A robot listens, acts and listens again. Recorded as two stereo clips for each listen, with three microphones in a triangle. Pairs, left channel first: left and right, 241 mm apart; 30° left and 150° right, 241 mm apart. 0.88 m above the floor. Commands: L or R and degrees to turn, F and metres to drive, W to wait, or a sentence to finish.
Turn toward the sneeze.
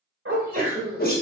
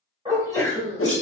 R45
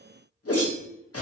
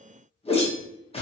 I heard a sneeze from this way, but can't make it out now.